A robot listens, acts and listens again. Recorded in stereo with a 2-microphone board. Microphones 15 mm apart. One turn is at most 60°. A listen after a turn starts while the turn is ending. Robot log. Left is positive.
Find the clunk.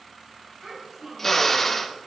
cmd idle
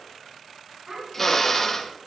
cmd idle
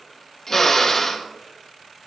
end: I can't make out a clunk, only a child speaking and a drill.